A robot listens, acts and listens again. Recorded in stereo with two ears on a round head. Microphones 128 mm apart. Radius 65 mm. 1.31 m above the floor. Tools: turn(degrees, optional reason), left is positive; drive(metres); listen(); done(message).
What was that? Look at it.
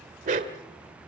turn(degrees=-60, reason="The dog barking: about 60° right or 120° right.")
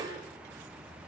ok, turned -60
turn(degrees=-25, reason="So it is at 25° right.")
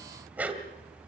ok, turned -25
turn(degrees=-10, reason="The dog barking is now 10° right.")
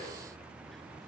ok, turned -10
listen()
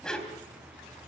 done("Facing the dog barking.")